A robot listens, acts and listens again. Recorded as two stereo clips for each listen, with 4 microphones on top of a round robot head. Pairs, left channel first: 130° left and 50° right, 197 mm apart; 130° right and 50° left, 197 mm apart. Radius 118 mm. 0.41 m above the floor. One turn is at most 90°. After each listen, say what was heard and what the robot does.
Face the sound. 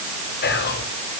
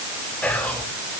The whispering: 150° left. Turn 90° left.
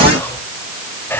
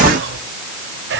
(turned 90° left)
The whispering is now 50° left. Turn 50° left.
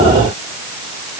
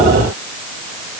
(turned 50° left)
The whispering is now 20° left. Turn 20° left.
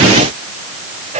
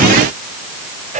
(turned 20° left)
Facing the whispering.